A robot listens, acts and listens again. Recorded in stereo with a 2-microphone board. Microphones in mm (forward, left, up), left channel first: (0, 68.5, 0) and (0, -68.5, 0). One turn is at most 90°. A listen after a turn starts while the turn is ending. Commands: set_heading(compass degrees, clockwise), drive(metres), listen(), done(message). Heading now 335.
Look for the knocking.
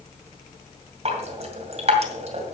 listen()
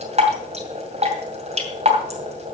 listen()
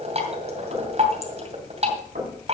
set_heading(65)
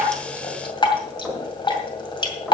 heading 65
done("Facing the knocking, over 4 m away.")